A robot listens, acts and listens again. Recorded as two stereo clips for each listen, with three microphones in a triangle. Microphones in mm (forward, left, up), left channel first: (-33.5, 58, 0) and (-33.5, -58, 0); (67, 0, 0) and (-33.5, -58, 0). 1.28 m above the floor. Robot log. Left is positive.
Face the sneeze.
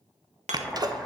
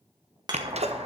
note: The sneeze: 140° right.
cmd yaw -140
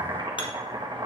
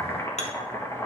end: Facing where the sneeze came from. I can't hear it now.